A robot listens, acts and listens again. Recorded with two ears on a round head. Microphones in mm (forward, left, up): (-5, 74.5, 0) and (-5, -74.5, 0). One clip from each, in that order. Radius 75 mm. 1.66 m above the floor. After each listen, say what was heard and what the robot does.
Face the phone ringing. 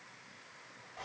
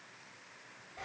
Keep listening.
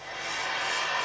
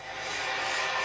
Keep listening.
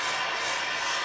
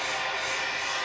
I can't make out a phone ringing to turn to.